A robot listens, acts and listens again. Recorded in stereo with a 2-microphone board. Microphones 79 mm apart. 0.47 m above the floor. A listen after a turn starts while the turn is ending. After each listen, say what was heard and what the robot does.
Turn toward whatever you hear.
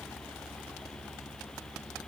Keep listening.
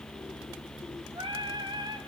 The singing: about 70° right or 110° right. Turn 70° right.
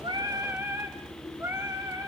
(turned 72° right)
So it is at 35° right. Turn 35° right.
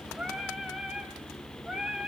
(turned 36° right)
The singing is now 10° right. Turn 10° right.
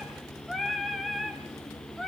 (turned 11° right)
Found it: singing, straight ahead.